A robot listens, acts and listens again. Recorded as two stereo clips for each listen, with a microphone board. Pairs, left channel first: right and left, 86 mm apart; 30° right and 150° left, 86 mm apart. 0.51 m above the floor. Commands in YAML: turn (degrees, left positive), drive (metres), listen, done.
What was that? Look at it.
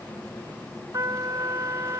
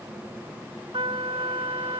turn: 140
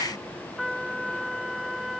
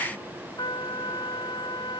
done: "Facing the trumpet."